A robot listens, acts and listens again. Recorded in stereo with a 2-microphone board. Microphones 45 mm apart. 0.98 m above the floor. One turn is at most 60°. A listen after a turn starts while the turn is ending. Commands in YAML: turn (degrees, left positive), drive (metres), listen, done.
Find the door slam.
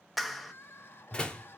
turn: 20
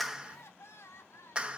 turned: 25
listen: true
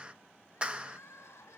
done: "I heard a door slam, but can't make it out now. It was about 5° right or 135° left."